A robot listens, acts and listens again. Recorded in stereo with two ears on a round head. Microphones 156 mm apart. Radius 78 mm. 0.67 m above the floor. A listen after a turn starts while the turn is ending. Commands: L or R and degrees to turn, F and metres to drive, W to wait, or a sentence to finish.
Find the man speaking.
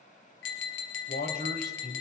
L60
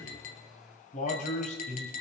L40
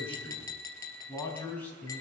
L10
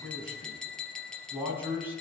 R10
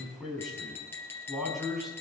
Facing the man speaking.